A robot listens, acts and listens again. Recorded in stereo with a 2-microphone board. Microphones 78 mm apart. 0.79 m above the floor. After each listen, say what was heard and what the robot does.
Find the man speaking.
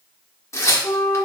Keep listening.
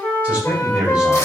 Turn 30° right.
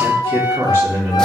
So it is at 150° right. Turn 150° right.
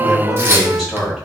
Facing the man speaking, over 4 m away.